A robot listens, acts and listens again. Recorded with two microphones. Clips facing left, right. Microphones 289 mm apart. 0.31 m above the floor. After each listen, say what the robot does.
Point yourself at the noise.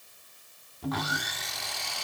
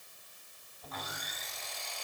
Turn 90° left.
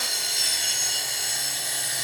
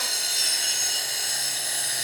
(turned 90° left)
Facing the sawing, 1 to 2 m away.